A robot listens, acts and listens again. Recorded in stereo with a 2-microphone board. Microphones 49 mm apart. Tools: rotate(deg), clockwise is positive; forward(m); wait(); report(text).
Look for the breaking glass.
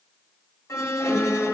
wait()
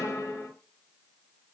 wait()
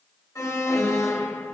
report("I can't make out breaking glass to turn to.")